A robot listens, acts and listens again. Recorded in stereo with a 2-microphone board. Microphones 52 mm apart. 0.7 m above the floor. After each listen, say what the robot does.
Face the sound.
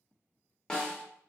Turn 30° left.
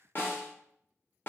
Turn 135° left.
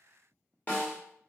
Turn 35° left.
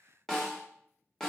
Turn 10° left.
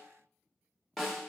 Found it: a snare drum, straight ahead, under 1 m away.